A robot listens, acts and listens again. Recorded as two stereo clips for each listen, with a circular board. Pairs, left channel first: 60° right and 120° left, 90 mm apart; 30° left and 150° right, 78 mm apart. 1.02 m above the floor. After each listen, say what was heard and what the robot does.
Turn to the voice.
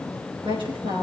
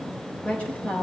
The woman speaking: 105° left. Turn 105° left.
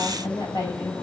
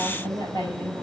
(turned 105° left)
The woman speaking is now 10° right. Turn 10° right.
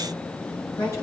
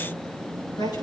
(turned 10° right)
Facing the woman speaking.